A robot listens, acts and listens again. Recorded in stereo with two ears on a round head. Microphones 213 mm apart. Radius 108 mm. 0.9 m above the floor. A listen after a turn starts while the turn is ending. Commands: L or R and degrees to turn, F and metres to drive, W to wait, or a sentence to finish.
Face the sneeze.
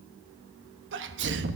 R50
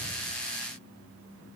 W
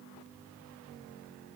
I heard a sneeze, but can't make it out now. It was about straight ahead or 80° right.